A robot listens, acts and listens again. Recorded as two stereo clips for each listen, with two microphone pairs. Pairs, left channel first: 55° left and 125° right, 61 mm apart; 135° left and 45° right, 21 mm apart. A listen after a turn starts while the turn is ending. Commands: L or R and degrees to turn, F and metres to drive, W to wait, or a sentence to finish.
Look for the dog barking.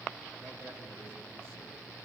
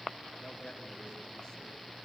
W
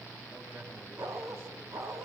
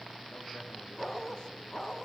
R160
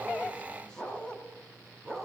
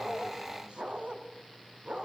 R30
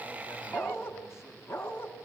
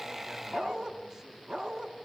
Found it: a dog barking, straight ahead, 2 to 4 m away.